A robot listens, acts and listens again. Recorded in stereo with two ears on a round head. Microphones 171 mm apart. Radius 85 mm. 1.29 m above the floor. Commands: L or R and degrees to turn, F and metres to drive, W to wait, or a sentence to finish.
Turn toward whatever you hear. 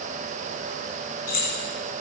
L45
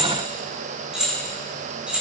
Found it: keys jangling, straight ahead.